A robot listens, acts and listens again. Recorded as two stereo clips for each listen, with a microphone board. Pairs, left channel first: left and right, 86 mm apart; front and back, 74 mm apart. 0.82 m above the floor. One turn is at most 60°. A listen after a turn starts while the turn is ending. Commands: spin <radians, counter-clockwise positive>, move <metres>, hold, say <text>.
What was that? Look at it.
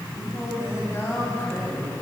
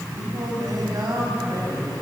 spin 1.05
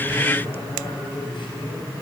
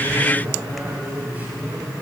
spin 1.05
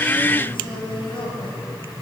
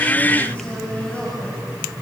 spin 1.05
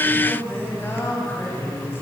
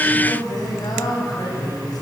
spin 0.44
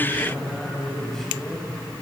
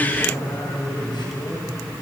say Found it: singing, straight ahead, over 4 m away.